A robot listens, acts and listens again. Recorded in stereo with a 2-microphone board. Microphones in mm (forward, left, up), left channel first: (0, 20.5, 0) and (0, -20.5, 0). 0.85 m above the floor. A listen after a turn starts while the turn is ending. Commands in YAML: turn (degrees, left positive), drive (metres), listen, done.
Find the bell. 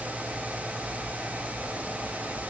listen: true
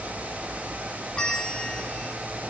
turn: 25
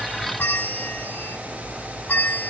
turn: 125
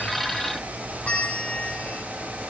turn: 30
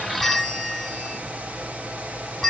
done: "Found it: a bell, straight ahead, 2 to 4 m away."